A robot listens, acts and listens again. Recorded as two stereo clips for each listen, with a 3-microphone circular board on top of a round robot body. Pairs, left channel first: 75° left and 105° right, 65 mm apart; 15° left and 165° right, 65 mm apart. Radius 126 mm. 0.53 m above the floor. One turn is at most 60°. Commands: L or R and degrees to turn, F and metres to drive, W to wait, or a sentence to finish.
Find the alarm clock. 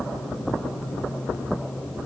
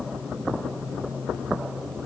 W
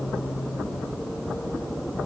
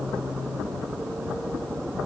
W
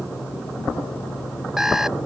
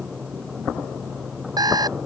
L60
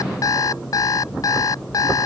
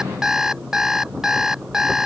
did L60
L60
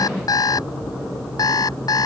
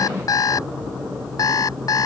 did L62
L50
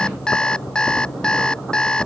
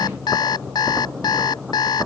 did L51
Found it: an alarm clock, straight ahead.